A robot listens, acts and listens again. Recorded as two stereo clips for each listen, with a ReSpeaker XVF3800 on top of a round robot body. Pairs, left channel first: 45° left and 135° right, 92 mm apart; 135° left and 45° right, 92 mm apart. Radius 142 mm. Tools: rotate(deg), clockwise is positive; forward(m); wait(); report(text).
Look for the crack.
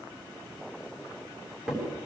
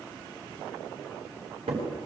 rotate(50)
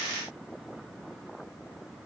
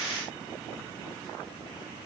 report("Facing where the crack came from. I can't hear it now.")